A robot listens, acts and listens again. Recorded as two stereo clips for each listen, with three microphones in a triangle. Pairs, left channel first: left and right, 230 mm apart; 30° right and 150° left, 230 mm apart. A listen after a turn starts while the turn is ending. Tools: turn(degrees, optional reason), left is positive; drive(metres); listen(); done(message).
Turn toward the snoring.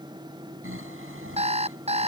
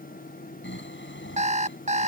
turn(degrees=-65, reason="The snoring: 65° right.")
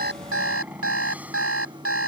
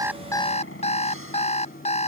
listen()
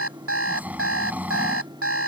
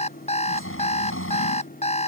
done("Found it: snoring, straight ahead.")